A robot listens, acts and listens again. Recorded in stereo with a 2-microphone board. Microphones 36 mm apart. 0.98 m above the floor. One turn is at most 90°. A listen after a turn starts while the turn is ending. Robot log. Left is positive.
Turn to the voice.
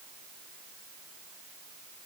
cmd idle
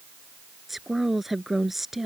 cmd yaw -30
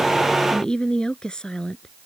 note: So it is at 25° left.
cmd yaw +25
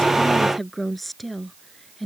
end: Found it: a woman speaking, straight ahead.